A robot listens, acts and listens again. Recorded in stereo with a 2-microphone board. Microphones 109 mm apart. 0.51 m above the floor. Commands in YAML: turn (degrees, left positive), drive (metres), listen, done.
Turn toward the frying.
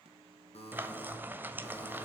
turn: -15
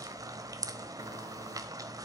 turn: -150
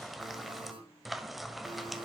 done: "Found it: frying, straight ahead, 1 to 2 m away."